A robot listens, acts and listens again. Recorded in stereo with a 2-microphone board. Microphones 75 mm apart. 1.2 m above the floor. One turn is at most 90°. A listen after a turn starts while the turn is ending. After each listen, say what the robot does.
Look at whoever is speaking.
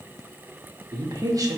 Turn 50° right.
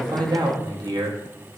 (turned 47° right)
Turn 70° right.
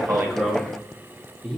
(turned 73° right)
Found it: a man speaking, straight ahead, under 1 m away.